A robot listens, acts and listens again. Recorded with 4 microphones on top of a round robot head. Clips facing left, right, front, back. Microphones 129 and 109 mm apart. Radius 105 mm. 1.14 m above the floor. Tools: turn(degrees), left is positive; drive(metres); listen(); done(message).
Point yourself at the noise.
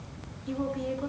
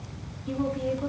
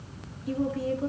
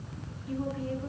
done("Facing the woman speaking.")